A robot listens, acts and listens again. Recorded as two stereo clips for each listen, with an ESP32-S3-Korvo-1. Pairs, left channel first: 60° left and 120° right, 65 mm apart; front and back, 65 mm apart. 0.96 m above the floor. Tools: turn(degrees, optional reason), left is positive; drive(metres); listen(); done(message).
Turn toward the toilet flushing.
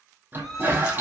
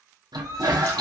turn(degrees=180, reason="The toilet flushing: straight behind.")
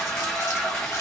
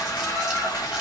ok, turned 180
turn(degrees=-20, reason="The toilet flushing is now 20° right.")
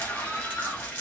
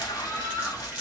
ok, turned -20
done("Found it: a toilet flushing, straight ahead, under 1 m away.")